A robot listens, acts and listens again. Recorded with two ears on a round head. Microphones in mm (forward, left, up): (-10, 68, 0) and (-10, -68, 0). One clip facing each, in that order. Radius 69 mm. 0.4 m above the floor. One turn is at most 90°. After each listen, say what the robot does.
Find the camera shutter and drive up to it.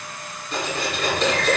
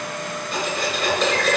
Keep listening.
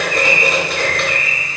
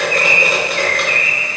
Keep listening.
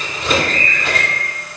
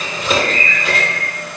I can't make out a camera shutter, only cutlery clinking and a bird.